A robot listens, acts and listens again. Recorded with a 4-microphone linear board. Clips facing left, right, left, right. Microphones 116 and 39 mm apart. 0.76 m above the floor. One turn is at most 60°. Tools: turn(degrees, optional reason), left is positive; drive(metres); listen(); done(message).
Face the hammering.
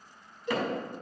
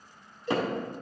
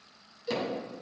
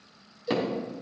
turn(degrees=-25, reason="The hammering: about 25° right or 155° right.")
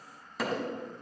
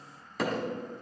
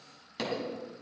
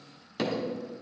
done("Found it: hammering, straight ahead.")